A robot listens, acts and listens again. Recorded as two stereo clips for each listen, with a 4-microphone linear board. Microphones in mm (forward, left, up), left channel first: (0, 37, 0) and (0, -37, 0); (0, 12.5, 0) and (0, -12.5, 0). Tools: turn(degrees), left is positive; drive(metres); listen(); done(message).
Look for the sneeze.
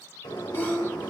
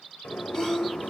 turn(degrees=25)
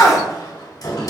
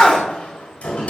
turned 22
turn(degrees=130)
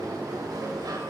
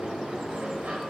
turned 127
done("Facing where the sneeze came from. I can't hear it now.")